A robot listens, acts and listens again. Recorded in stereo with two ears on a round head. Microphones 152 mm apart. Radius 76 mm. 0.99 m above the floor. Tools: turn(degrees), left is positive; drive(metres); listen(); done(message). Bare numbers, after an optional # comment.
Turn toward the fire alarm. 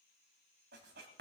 listen()
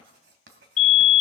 # The fire alarm: about 50° left or 130° left.
turn(50)
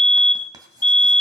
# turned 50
# So it is at 10° left.
turn(10)
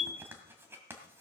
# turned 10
listen()
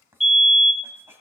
done("Facing the fire alarm.")